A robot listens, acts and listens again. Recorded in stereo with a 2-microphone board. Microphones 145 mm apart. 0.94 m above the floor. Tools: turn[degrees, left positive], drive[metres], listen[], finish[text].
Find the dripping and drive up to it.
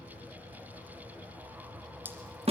Action: turn[-30]
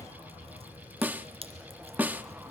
Thought: So it is at 135° right.
Action: turn[-135]
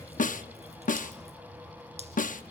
Action: listen[]
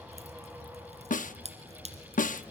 Thought: The dripping is now 55° right.
Action: turn[-55]
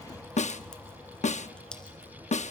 Action: listen[]
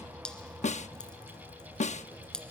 Action: drive[1.0]
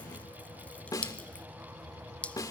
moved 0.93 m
Thought: The dripping is now 10° left.
Action: turn[10]
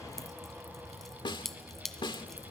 Action: drive[1.0]
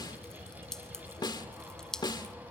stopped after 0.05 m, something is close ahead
Action: finish[I am next to the dripping.]